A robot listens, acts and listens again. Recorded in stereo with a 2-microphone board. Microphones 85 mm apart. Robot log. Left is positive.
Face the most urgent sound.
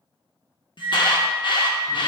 note: The alarm: about 65° left or 115° left.
cmd yaw +65
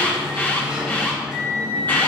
note: So it is at 25° left.
cmd yaw +25
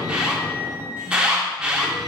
note: The alarm is now 10° right.
cmd yaw -10
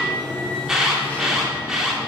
end: Facing the alarm.